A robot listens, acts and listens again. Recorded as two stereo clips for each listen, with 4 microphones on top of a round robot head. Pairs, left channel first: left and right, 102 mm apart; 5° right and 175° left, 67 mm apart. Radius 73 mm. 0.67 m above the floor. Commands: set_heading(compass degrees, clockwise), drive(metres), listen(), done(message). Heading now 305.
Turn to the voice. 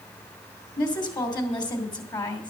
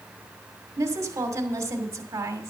set_heading(170)
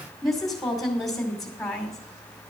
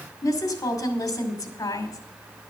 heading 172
done("Found it: a woman speaking, straight ahead.")